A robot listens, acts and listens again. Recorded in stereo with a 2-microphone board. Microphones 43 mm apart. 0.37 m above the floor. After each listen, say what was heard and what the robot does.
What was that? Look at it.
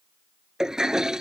Turn 30° right.
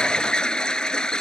So it is at 20° left. Turn 20° left.
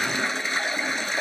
Facing the toilet flushing.